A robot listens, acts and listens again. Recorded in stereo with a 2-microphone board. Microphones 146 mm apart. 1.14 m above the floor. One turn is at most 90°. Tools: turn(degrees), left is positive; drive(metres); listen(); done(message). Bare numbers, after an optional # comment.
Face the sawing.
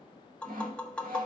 # The sawing: about 70° right or 110° right.
turn(-70)
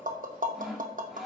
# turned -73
done("Facing the sawing.")